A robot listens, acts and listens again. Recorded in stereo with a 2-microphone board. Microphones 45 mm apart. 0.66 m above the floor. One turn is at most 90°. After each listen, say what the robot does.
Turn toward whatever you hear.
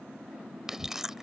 Turn 30° right.
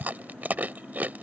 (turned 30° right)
Turn 90° right.
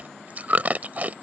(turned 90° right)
Turn 40° right.
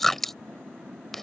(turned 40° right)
Turn 10° left.
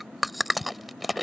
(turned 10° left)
Found it: chewing, straight ahead.